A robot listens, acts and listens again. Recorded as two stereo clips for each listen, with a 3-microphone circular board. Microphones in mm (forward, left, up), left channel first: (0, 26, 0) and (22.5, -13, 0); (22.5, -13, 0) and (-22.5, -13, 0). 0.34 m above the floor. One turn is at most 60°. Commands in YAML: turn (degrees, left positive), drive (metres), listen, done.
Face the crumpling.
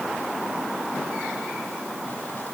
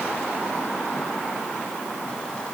listen: true
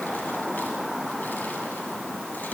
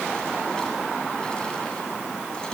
listen: true
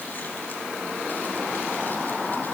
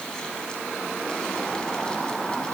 done: "I can't make out crumpling."